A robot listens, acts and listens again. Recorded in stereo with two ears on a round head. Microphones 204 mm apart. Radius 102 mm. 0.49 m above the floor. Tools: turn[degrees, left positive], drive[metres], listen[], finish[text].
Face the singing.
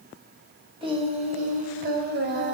Thought: The singing: about 55° right or 125° right.
Action: turn[-55]
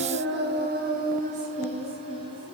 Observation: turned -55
Thought: So it is at 20° right.
Action: turn[-20]
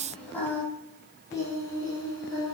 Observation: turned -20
Thought: The singing is now 15° left.
Action: turn[15]
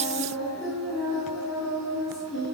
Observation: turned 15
Action: finish[Facing the singing.]